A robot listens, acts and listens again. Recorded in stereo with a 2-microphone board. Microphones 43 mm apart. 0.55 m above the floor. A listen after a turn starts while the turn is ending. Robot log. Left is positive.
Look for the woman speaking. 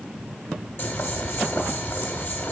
cmd idle
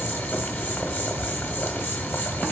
cmd idle
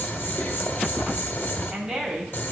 cmd yaw -30
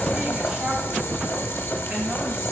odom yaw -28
cmd idle
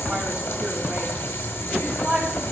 note: So it is at 150° right.
cmd yaw -150
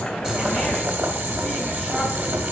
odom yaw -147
cmd idle
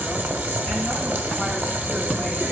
cmd idle
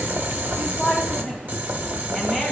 end: Facing the woman speaking, 2 to 4 m away.